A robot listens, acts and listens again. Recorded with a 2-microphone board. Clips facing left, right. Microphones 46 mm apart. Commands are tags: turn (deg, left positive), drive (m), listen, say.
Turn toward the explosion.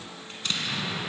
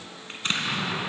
<turn deg="-40"/>
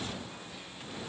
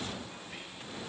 <listen/>
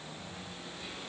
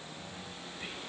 <say>I heard an explosion, but can't make it out now. It was about straight ahead or 100° right.</say>